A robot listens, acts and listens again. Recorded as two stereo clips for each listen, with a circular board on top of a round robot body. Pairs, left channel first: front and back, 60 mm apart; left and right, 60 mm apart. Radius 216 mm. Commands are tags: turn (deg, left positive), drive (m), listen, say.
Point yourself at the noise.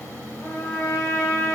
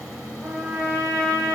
<turn deg="-45"/>
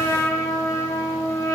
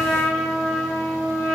<say>Found it: a trumpet, straight ahead, 1 to 2 m away.</say>